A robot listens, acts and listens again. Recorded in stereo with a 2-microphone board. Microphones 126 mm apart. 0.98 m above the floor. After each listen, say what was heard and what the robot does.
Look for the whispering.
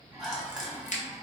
Turn 30° right.
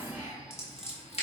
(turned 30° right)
Keep listening.
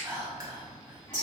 So it is at 145° right. Turn 145° right.
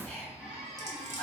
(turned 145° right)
The whispering is now 15° left. Turn 15° left.
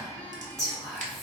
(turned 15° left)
Found it: whispering, straight ahead.